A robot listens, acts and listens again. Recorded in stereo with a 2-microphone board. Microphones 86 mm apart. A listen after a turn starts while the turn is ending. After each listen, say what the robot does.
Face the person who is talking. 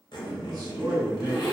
Turn 50° right.
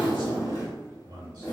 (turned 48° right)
Turn 75° right.
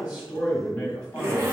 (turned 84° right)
Turn 10° left.
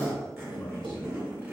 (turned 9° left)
Facing the man speaking.